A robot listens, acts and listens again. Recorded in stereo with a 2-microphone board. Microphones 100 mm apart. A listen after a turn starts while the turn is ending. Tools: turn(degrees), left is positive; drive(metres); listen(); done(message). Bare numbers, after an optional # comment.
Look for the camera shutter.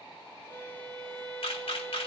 # The camera shutter: about 65° left or 115° left.
turn(65)
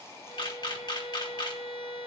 # So it is at 45° left.
turn(45)
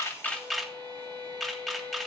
done("Facing the camera shutter, 1 to 2 m away.")